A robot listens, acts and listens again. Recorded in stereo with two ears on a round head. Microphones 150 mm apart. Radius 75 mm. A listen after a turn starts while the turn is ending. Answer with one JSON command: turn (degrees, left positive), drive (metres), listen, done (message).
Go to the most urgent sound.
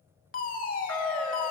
{"turn": 55}
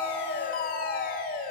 {"turn": 60}
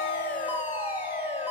{"turn": -15}
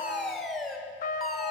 {"drive": 1.0}
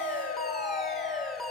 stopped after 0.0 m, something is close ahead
{"done": "Something is in my way. I am facing the fire alarm but have not reached it."}